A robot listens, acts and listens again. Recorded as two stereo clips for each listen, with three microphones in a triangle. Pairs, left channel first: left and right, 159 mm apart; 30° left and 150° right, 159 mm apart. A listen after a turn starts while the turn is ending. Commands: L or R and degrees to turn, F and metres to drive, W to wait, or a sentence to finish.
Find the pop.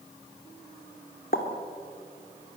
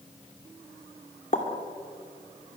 L70
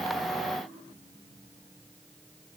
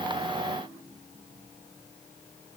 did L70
I heard a pop from this way, but can't make it out now.